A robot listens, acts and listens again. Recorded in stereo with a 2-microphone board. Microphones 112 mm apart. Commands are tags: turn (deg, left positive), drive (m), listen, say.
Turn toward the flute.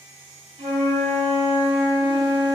<turn deg="-70"/>
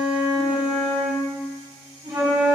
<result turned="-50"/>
<turn deg="-40"/>
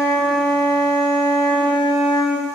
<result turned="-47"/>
<turn deg="10"/>
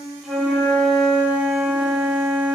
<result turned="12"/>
<say>Facing the flute, 1 to 2 m away.</say>